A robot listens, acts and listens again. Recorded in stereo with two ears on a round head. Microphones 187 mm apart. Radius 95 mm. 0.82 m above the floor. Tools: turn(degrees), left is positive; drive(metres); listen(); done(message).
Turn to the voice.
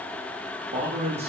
turn(degrees=-30)
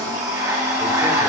listen()
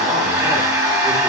listen()
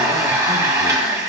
done("I heard a man speaking, but can't make it out now. It was about straight ahead or 120° right.")